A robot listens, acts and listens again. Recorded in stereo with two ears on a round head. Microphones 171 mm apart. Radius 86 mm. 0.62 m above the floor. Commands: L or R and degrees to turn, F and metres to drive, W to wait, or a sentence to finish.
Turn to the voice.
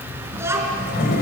R30
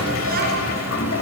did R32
W
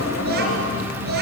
R120
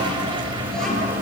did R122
W
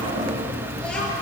Facing the child speaking.